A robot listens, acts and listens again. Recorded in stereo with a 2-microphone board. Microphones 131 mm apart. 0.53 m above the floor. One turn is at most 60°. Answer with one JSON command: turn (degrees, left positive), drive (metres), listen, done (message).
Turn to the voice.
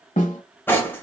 {"listen": true}
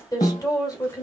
{"turn": 30}
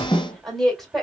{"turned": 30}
{"done": "Found it: a woman speaking, straight ahead."}